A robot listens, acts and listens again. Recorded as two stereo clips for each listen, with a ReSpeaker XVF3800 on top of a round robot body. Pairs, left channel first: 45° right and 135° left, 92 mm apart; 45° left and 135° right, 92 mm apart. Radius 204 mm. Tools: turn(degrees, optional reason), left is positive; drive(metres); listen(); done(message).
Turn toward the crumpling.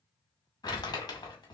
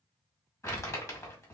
turn(degrees=-10, reason="The crumpling: 10° right.")
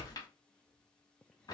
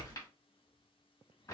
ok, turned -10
done("Found it: crumpling, straight ahead, 2 to 4 m away.")